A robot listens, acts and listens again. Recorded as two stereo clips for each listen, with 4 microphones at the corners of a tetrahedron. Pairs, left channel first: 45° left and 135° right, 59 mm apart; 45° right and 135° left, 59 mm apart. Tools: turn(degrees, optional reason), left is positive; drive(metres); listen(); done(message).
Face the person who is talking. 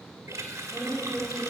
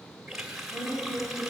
turn(degrees=-60, reason="The woman speaking: 60° right.")
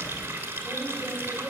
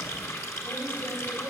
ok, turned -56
turn(degrees=-20, reason="The woman speaking is now 20° right.")
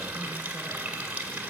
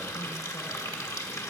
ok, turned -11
listen()
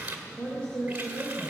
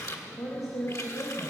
turn(degrees=-30, reason="The woman speaking is now 30° right.")
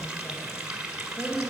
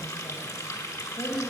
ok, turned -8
turn(degrees=-20, reason="The woman speaking is now 20° right.")
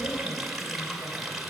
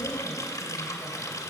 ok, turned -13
turn(degrees=-10, reason="Nothing new. It was at 10° right.")
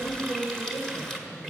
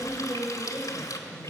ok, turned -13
done("Facing the woman speaking, 2 to 4 m away.")